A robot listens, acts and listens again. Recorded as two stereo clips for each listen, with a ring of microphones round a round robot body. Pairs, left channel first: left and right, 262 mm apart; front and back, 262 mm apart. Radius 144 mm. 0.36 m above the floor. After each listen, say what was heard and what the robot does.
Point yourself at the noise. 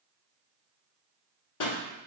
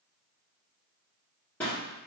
The pop: 85° left. Turn 85° left.
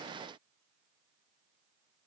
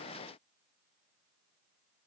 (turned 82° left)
I heard a pop from this way, but can't make it out now.